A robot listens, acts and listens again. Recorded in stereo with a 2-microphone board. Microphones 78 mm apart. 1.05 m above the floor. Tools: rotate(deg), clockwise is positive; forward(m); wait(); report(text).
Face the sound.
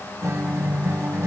rotate(40)
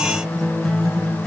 report("Found it: a guitar, straight ahead.")